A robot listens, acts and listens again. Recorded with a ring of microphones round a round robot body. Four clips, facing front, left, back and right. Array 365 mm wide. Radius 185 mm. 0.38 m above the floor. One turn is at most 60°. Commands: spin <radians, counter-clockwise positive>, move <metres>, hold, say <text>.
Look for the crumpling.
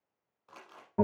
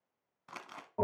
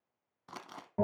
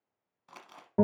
spin 1.05
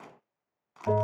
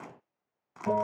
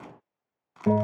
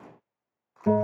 spin 1.05
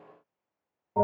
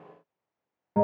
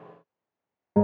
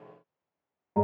spin 0.70
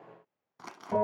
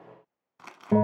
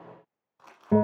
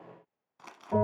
spin 0.26
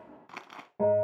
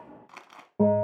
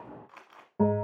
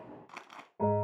say Found it: crumpling, straight ahead, 1 to 2 m away.